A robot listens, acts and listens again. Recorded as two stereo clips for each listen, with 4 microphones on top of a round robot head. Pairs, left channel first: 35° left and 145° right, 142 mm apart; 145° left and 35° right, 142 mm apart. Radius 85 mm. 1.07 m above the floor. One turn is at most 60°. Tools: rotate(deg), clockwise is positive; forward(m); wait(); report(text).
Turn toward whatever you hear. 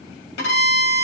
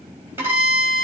rotate(-40)
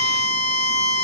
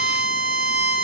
rotate(10)
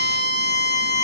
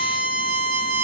report("Facing the violin, 1 to 2 m away.")